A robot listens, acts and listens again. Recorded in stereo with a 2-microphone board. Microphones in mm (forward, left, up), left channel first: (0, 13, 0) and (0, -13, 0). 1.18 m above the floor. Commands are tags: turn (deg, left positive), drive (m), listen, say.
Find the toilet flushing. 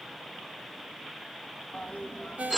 <turn deg="70"/>
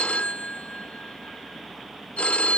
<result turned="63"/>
<listen/>
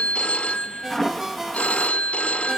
<turn deg="10"/>
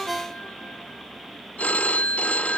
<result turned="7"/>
<listen/>
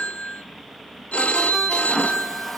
<say>Facing the toilet flushing.</say>